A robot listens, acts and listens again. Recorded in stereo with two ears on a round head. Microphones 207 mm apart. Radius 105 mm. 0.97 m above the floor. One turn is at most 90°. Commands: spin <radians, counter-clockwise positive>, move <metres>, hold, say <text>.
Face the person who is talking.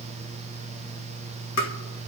hold
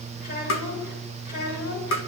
spin 0.87
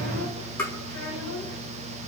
spin 1.31
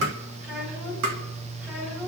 say Facing the child speaking, over 4 m away.